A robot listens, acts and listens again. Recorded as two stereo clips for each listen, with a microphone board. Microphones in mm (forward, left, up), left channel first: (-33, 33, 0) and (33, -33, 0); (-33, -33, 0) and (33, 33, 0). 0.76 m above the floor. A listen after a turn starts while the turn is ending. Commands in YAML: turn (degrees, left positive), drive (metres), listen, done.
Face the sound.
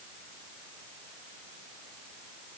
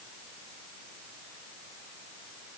listen: true
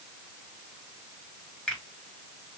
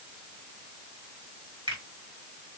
turn: 55
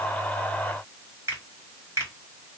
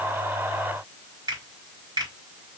turn: 10
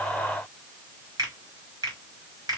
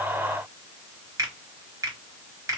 done: "Found it: a finger snap, straight ahead, 2 to 4 m away."